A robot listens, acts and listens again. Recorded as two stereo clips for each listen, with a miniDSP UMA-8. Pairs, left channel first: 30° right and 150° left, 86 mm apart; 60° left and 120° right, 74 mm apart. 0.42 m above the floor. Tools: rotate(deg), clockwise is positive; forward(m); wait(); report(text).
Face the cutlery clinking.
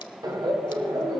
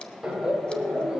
wait()
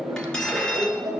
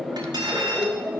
rotate(110)
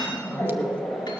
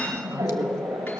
wait()
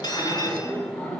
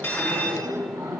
report("Facing the cutlery clinking.")